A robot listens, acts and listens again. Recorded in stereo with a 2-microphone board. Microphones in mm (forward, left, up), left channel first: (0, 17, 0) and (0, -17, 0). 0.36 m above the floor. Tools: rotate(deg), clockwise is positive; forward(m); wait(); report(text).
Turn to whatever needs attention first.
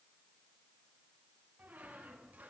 wait()
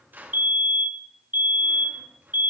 rotate(65)
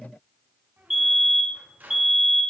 rotate(10)
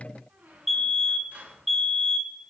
report("Facing the fire alarm.")